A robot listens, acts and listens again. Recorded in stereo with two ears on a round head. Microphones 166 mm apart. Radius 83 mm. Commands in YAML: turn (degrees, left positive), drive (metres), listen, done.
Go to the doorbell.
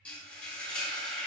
listen: true
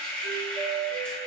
turn: -50
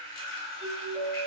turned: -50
drive: 1.0
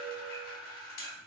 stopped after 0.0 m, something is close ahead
done: "Something is in my way. I am facing the doorbell but have not reached it."